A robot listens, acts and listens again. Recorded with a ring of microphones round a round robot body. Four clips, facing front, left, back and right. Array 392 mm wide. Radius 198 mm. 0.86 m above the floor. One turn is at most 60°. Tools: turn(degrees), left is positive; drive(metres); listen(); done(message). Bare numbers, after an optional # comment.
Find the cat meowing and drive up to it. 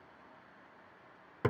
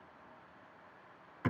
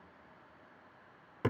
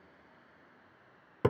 listen()
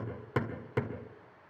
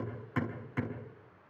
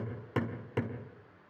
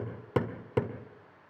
listen()
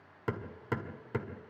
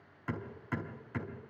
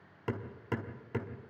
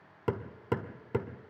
done("I can't make out a cat meowing to turn to.")